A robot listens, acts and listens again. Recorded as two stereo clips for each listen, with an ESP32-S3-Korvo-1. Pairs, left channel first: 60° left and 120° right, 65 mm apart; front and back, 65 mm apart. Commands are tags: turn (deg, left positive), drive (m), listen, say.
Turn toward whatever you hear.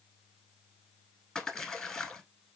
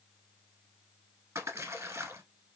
<turn deg="140"/>
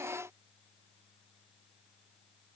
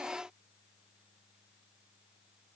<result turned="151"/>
<turn deg="-10"/>
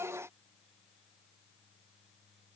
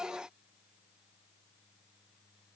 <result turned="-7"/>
<say>I heard a splash from this way, but can't make it out now.</say>